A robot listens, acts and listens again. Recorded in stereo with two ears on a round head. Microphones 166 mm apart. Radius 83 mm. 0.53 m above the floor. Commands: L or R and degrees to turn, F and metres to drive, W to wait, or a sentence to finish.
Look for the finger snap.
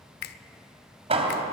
L60
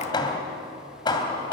W
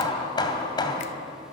W
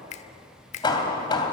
L45
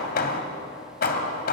W
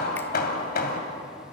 W
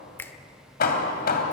L15
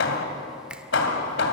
W
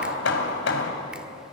W
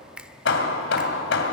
Facing the finger snap.